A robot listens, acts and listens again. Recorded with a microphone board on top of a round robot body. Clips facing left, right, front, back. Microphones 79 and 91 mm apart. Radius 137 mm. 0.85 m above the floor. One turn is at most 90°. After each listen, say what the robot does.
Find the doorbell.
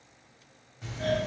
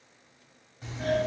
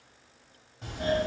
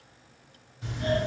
Found it: a doorbell, straight ahead.